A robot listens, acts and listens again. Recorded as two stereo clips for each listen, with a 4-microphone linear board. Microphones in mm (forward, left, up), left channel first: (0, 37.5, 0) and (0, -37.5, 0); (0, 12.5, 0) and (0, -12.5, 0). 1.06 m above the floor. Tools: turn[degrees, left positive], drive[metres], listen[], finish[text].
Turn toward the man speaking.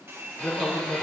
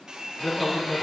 Thought: The man speaking: about 70° left or 110° left.
Action: turn[70]
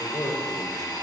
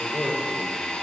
Thought: So it is at 40° left.
Action: turn[40]
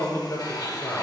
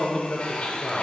Thought: The man speaking is now 20° left.
Action: turn[20]
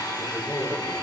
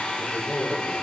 Thought: The man speaking is now 10° left.
Action: turn[10]
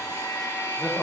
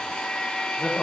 Action: finish[Found it: a man speaking, straight ahead, 2 to 4 m away.]